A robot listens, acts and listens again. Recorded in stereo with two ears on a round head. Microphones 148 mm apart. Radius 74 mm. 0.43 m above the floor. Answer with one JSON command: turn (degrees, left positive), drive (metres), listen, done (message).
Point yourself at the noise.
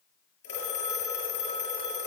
{"turn": 90}
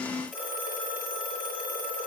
{"turn": -10}
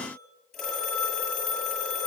{"done": "Facing the phone ringing."}